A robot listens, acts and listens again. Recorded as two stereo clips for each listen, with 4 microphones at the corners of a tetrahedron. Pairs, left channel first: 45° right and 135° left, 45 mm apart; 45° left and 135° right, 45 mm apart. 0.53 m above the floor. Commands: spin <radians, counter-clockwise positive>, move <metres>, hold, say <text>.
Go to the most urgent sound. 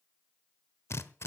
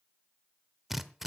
hold
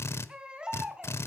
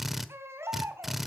spin -2.71
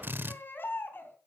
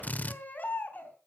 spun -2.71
spin -0.17
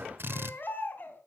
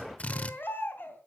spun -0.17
move 1.0
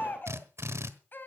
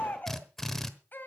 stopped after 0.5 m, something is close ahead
say Blocked. The baby crying is further on, straight ahead.